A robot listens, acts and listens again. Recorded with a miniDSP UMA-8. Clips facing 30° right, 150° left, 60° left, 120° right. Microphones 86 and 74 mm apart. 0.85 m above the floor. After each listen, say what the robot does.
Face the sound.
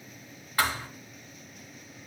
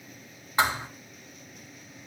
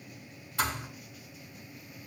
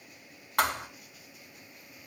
Turn 140° right.
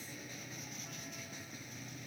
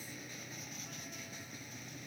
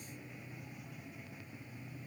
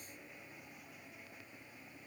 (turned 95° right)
Turn 45° right.
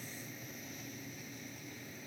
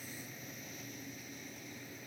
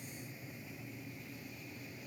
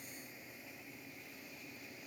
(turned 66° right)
Turn 20° left.
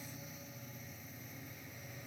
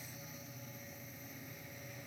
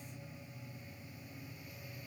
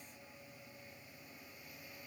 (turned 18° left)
I heard a thud from this way, but can't make it out now.